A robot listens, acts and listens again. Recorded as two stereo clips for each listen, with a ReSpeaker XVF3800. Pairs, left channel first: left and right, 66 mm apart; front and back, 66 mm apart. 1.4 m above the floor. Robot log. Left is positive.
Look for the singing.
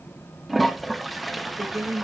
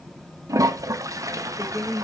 note: The singing: 45° right.
cmd yaw -45
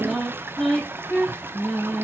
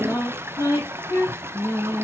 note: The singing is now 15° left.
cmd yaw +15
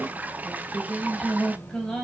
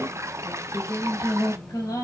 note: The singing is now 10° left.
cmd yaw +10
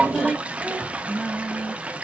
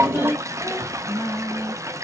end: Facing the singing.